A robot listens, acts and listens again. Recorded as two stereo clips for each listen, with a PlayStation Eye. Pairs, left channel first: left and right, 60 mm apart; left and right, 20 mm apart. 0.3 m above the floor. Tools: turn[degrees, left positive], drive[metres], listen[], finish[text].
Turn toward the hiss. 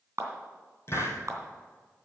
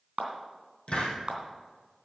Thought: The hiss: about 45° left or 135° left.
Action: turn[45]
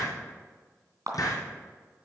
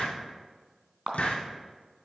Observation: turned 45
Thought: So it is at 90° left.
Action: turn[90]
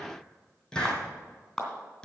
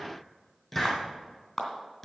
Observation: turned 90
Thought: The hiss is now 10° left.
Action: turn[10]
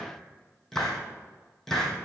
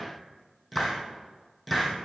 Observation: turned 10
Action: finish[Facing the hiss, 2 to 4 m away.]